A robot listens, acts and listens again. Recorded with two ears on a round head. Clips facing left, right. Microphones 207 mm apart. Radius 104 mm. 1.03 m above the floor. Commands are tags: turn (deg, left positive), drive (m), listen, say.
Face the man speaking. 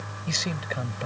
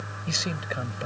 <turn deg="-30"/>
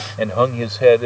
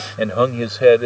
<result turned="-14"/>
<turn deg="-30"/>
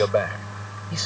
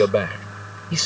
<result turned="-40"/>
<turn deg="-135"/>
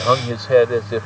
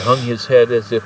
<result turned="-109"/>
<turn deg="-40"/>
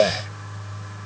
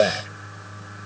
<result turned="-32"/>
<turn deg="-10"/>
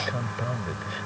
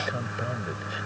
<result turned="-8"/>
<say>Found it: a man speaking, straight ahead.</say>